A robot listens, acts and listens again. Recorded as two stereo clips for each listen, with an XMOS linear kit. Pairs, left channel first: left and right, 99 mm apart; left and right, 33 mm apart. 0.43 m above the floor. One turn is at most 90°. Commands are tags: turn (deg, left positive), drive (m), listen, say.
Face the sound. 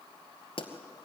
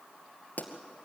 <turn deg="60"/>
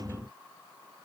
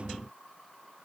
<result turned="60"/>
<listen/>
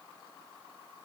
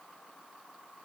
<say>I heard a pop, but can't make it out now. It was about straight ahead or 60° left.</say>